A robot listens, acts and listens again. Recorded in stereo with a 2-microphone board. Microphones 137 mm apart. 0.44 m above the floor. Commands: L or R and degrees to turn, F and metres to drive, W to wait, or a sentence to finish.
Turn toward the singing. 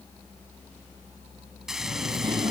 R35
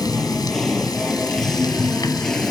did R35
Facing the singing.